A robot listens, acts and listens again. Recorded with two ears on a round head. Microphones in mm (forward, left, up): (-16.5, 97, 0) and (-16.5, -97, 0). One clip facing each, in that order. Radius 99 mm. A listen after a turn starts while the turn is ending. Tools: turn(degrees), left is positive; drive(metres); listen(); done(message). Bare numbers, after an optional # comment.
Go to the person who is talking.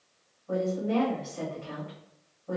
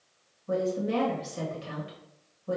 # The woman speaking: about 45° right or 135° right.
turn(-45)
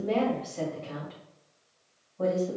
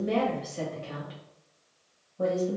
# So it is at 15° right.
turn(-15)
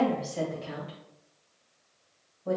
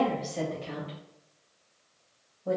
drive(1.0)
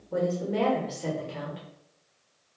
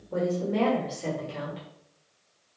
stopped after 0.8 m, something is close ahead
done("Arrived at the woman speaking, straight ahead.")